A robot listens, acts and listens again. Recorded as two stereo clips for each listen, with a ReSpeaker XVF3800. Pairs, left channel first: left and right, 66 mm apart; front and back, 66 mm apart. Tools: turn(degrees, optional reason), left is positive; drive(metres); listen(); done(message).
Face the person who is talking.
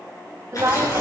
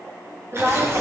turn(degrees=-130, reason="The woman speaking: 130° right.")
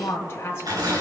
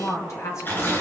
turn(degrees=40, reason="The woman speaking is now 40° left.")
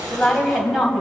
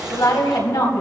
done("Found it: a woman speaking, straight ahead, 2 to 4 m away.")